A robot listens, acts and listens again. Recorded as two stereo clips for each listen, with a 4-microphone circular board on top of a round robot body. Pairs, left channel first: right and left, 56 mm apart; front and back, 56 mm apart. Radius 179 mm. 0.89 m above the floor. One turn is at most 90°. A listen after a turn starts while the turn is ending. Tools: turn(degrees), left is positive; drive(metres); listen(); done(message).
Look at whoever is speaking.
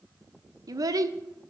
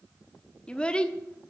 turn(degrees=75)
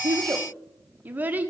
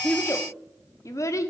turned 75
turn(degrees=25)
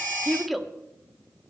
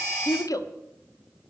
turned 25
done("Found it: a child speaking, straight ahead.")